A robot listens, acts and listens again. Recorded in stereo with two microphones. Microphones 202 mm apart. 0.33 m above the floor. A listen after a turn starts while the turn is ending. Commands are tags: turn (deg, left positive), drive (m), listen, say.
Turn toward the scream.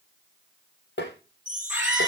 <turn deg="-30"/>
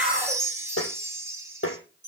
<listen/>
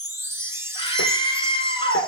<turn deg="25"/>
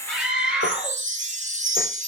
<say>Facing the scream, over 4 m away.</say>